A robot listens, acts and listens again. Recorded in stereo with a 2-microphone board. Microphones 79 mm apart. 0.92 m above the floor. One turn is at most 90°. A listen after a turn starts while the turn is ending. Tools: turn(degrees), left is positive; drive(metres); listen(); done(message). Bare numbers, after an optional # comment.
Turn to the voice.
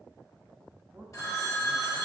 # The man speaking: about 20° right or 160° right.
turn(-20)
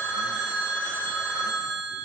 listen()
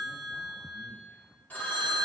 listen()
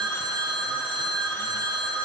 done("I heard a man speaking, but can't make it out now. It was about straight ahead or 140° right.")